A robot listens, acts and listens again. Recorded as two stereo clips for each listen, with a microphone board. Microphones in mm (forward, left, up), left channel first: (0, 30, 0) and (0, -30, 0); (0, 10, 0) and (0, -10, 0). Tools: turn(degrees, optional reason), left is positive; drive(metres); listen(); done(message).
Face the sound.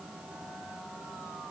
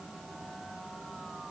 listen()
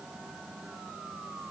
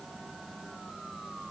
listen()
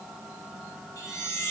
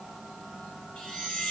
turn(degrees=70, reason="The chime: about 70° left or 110° left.")
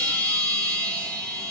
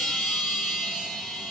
done("Facing the chime, 1 to 2 m away.")